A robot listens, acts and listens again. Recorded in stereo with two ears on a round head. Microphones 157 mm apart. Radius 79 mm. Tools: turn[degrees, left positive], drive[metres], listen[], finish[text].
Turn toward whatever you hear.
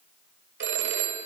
Thought: The phone ringing: about 70° right or 110° right.
Action: turn[-70]
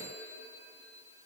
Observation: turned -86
Thought: So it is at 15° right.
Action: turn[-15]
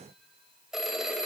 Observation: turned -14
Action: finish[Facing the phone ringing, 1 to 2 m away.]